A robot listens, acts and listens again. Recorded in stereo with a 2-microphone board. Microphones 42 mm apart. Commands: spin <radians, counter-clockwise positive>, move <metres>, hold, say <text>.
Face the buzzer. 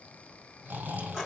hold
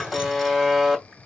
spin -0.52
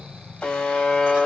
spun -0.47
spin 0.44
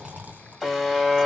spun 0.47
say Facing the buzzer.